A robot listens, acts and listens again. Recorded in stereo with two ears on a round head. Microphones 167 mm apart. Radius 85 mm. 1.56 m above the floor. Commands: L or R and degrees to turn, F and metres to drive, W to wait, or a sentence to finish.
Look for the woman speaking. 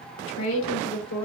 L90
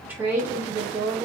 R20
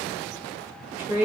R15
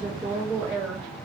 R10
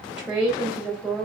Found it: a woman speaking, straight ahead, 2 to 4 m away.